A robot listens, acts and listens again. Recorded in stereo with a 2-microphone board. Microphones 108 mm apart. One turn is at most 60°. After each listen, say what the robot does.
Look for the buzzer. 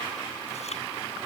Keep listening.
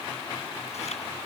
Keep listening.
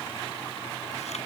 I can't make out a buzzer to turn to.